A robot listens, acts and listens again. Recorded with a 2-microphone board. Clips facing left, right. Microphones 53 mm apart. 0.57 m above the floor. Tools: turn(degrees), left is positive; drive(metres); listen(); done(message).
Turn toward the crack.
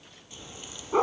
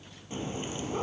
turn(degrees=-40)
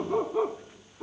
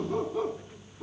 listen()
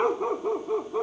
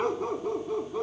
done("I heard a crack, but can't make it out now. It was about straight ahead or 100° right.")